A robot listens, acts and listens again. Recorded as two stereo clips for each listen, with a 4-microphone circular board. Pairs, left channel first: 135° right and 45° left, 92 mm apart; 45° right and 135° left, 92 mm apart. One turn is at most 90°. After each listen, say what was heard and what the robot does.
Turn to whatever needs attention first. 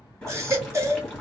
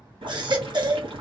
The baby crying: 105° left. Turn 90° left.
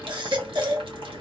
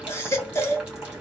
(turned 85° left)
The baby crying is now 15° left. Turn 15° left.
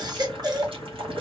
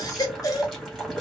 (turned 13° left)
Found it: a baby crying, straight ahead, 1 to 2 m away.